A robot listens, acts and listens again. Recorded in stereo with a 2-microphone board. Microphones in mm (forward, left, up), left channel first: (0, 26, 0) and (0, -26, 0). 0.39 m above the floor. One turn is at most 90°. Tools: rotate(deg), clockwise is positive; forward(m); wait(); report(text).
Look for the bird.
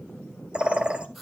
rotate(20)
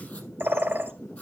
rotate(90)
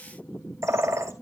rotate(90)
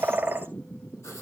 rotate(35)
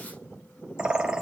rotate(15)
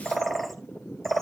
report("Found it: a bird, straight ahead, 1 to 2 m away.")